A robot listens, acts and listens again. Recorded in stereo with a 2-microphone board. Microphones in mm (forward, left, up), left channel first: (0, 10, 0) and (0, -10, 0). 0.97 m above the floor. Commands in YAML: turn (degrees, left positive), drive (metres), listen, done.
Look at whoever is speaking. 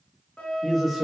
turn: 30
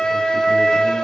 listen: true
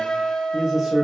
turn: -20
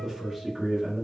done: "Found it: a man speaking, straight ahead."